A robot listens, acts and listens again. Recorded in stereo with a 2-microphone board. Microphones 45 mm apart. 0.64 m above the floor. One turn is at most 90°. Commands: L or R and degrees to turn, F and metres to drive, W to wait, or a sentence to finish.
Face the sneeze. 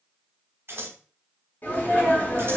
L45
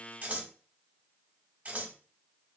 W
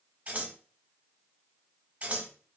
I heard a sneeze, but can't make it out now. It was about straight ahead or 90° left.